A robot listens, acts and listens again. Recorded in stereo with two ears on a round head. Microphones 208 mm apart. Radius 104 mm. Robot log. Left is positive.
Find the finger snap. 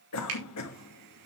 note: The finger snap: about 65° right or 115° right.
cmd yaw -65
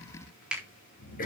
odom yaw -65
end: Found it: a finger snap, straight ahead, 2 to 4 m away.